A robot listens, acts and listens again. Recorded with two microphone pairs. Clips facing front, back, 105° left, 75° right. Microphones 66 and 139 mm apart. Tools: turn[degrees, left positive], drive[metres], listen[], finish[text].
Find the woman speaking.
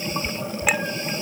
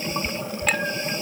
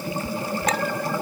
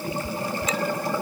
Action: listen[]
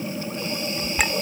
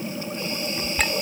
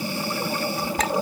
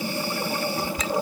Action: listen[]
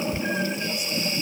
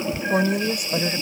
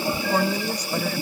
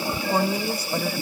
Thought: The woman speaking: 160° right.
Action: turn[-160]
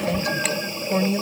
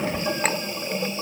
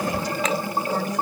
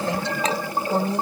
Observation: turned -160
Thought: The woman speaking is now 15° right.
Action: turn[-15]
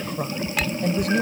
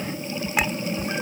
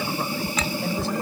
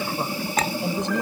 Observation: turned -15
Action: finish[Found it: a woman speaking, straight ahead.]